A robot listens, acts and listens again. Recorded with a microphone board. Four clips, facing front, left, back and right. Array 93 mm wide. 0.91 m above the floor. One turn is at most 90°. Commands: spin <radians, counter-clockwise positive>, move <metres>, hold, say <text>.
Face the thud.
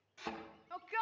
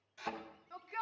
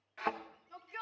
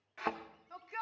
spin -1.57
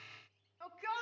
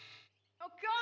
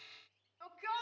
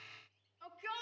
spin -0.70
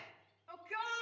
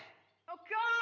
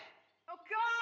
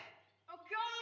say I heard a thud from this way, but can't make it out now.